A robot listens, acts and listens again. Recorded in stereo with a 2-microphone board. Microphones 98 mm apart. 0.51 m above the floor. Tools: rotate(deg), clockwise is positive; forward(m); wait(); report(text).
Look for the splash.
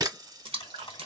rotate(75)
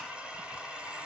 wait()
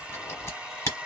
report("I heard a splash, but can't make it out now. It was about straight ahead or 30° right.")